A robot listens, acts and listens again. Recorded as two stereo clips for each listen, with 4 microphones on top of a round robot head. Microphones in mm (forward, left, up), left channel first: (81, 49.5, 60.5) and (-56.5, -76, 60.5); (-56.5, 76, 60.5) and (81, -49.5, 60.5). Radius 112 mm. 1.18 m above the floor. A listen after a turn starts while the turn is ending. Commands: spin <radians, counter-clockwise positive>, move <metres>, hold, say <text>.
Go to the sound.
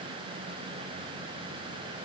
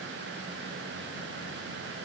hold
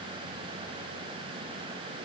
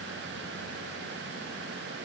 hold
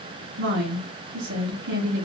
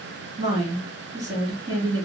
spin -2.01
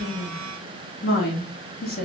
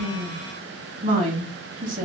move 1.0
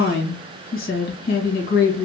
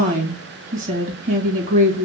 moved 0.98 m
move 1.0
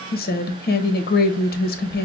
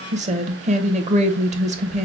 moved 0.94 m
spin 0.17
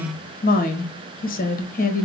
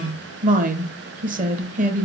move 1.0
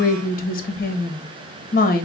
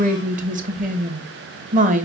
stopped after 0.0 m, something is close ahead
say Arrived at the woman speaking, straight ahead.